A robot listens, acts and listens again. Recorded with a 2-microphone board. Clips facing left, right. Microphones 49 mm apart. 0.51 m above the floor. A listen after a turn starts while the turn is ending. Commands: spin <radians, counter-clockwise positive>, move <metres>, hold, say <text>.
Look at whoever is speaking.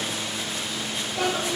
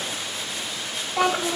spin -1.57
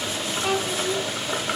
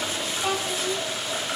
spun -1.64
say Found it: a child speaking, straight ahead.